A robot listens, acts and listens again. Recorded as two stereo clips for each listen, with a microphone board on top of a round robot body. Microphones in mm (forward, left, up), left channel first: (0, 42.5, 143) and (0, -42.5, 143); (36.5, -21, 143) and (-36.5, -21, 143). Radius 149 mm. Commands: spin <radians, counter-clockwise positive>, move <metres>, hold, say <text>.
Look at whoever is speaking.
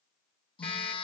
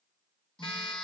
hold
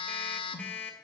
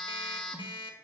hold
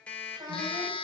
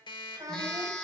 spin -2.36
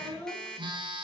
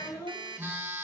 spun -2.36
spin 0.44
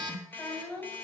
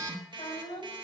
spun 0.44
spin 0.17
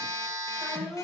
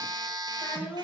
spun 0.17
say Facing the child speaking.